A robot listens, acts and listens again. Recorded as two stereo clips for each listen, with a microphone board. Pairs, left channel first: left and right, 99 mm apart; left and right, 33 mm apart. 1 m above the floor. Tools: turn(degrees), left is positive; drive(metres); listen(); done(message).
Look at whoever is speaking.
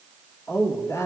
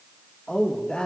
turn(degrees=30)
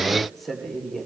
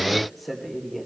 done("Found it: a woman speaking, straight ahead, 2 to 4 m away.")